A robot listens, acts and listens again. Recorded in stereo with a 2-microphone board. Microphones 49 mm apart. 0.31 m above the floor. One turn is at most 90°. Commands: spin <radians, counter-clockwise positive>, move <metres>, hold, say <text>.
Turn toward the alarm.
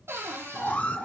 spin 0.61
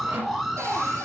say Found it: an alarm, straight ahead.